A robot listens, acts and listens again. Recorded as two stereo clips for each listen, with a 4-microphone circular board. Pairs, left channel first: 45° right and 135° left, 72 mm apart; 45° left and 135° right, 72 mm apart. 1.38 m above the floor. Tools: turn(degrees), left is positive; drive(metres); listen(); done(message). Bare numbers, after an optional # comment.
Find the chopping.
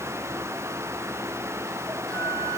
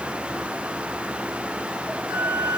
listen()
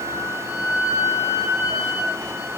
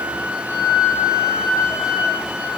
listen()
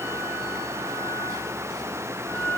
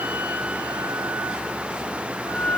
done("I can't make out chopping, only a flute.")